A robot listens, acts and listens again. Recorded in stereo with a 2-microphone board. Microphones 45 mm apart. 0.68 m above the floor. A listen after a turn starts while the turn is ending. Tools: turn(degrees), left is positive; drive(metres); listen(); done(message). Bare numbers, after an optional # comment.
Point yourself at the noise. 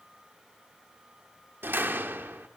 # The door slam: about 55° right or 125° right.
turn(-55)
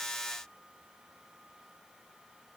listen()
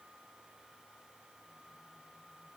done("I heard a door slam, but can't make it out now. It was about straight ahead or 70° right.")